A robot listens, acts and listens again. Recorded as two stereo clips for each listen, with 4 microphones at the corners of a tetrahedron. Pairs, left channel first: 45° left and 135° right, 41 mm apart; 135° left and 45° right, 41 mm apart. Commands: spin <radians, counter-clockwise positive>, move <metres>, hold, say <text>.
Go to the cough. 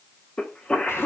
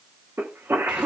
spin -0.35
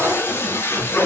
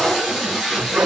move 1.0
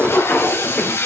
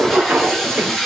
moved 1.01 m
move 1.0
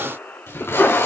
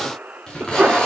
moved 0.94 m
move 1.0
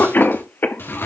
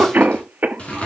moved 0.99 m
move 1.0
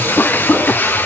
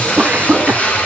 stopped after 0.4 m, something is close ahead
say Arrived at the cough, straight ahead.